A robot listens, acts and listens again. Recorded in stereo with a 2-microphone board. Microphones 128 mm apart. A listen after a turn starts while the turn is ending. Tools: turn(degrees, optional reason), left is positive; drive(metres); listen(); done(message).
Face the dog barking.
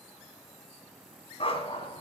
turn(degrees=45, reason="The dog barking: about 45° left or 135° left.")
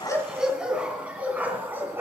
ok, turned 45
turn(degrees=-20, reason="So it is at 20° right.")
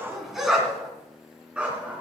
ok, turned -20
turn(degrees=-10, reason="The dog barking is now 10° right.")
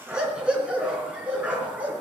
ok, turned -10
turn(degrees=-10, reason="The dog barking is now 10° right.")
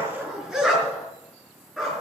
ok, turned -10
done("Found it: a dog barking, straight ahead, over 4 m away.")